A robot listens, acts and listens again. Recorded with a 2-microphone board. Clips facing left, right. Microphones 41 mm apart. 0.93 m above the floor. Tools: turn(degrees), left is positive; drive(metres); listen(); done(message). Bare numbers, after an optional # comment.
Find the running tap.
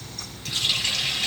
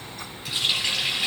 # The running tap: about 15° right or 165° right.
turn(-15)
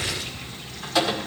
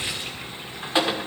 # So it is at 150° right.
turn(-150)
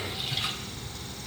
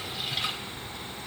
listen()
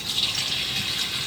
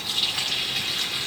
done("Found it: a running tap, straight ahead.")